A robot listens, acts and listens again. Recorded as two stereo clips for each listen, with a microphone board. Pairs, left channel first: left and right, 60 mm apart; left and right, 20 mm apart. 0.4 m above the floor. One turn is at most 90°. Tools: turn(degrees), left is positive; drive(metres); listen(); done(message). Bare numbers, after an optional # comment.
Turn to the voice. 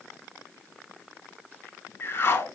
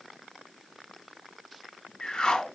listen()
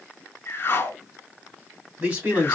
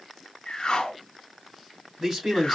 # The man speaking: about 25° right or 155° right.
turn(-25)
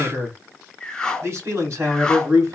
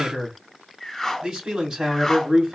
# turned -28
# So it is at 130° right.
turn(-90)
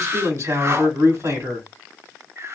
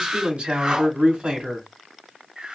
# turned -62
# The man speaking is now 65° right.
turn(-65)
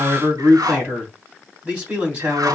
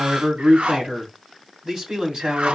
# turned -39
# The man speaking is now 25° right.
turn(-25)
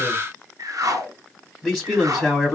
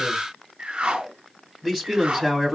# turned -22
done("Found it: a man speaking, straight ahead, 2 to 4 m away.")